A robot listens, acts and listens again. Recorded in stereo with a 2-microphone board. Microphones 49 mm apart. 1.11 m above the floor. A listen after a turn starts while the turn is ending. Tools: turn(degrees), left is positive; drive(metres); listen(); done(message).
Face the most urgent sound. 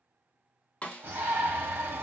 turn(degrees=-50)
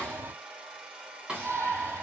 turn(degrees=-70)
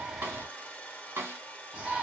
turn(degrees=-20)
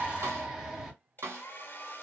done("Facing the shout.")